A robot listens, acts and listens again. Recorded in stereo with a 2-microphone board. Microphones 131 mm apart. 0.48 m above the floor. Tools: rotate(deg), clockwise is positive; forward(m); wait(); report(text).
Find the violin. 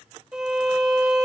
rotate(30)
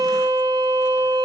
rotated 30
rotate(140)
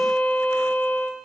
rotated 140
rotate(-15)
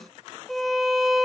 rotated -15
report("Found it: a violin, straight ahead.")